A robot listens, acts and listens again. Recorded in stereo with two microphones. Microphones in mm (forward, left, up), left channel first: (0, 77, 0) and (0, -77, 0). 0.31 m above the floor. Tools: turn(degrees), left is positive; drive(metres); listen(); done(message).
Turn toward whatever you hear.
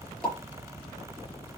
turn(degrees=30)
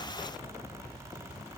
listen()
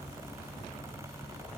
done("I heard a pop, but can't make it out now. It was about 25° right or 145° left.")